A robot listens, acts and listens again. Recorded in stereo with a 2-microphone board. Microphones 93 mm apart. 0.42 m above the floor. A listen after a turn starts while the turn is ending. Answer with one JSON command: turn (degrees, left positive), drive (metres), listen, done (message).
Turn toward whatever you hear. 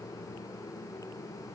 {"listen": true}
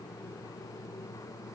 {"listen": true}
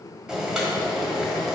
{"turn": -30}
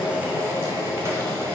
{"turn": -145}
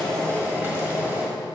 {"turn": -25}
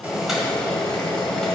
{"turn": 10}
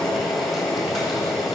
{"done": "Found it: boiling, straight ahead, 1 to 2 m away."}